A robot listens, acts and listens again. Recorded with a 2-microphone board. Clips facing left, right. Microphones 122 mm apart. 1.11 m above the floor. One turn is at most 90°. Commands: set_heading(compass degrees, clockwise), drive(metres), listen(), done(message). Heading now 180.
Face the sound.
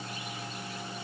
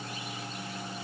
listen()
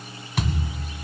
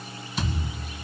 set_heading(110)
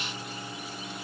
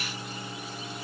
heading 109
listen()
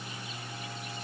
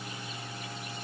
done("I heard a thud, but can't make it out now. It was about straight ahead or 40° left.")